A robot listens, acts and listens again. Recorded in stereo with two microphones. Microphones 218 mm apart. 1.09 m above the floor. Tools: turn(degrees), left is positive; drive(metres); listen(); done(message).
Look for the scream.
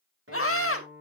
turn(degrees=90)
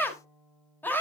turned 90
turn(degrees=10)
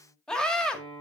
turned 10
done("Facing the scream, 1 to 2 m away.")